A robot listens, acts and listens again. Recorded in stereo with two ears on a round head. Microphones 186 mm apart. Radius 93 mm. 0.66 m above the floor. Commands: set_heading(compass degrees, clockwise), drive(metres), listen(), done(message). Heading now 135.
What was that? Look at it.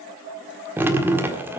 set_heading(165)
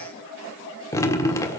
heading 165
set_heading(150)
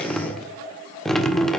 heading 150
done("Facing the dripping.")